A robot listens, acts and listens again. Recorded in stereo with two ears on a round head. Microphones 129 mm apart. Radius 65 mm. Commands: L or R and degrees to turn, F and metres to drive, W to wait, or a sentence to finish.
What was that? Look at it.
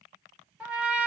R30
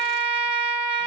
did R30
R140
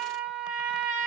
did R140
R10
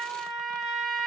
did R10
Found it: a trumpet, straight ahead.